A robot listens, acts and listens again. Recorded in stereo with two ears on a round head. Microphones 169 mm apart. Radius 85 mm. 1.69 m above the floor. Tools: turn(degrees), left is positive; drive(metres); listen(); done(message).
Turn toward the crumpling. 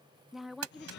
turn(degrees=-90)
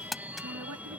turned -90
done("Found it: crumpling, straight ahead.")